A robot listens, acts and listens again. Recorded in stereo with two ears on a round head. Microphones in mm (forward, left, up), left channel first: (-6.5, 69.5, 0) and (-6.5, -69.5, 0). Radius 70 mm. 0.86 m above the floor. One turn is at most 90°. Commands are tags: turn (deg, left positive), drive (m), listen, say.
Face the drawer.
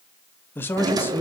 <turn deg="-25"/>
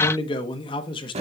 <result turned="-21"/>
<turn deg="-90"/>
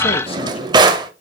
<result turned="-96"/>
<turn deg="-30"/>
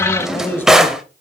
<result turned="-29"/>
<say>Found it: a drawer, straight ahead.</say>